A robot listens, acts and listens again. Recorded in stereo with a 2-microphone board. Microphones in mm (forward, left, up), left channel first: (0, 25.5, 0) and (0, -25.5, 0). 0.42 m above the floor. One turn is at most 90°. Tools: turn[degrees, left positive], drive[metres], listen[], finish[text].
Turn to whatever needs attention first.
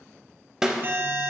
Thought: The alarm: about 45° right or 135° right.
Action: turn[-45]
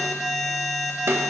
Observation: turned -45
Action: finish[Found it: an alarm, straight ahead.]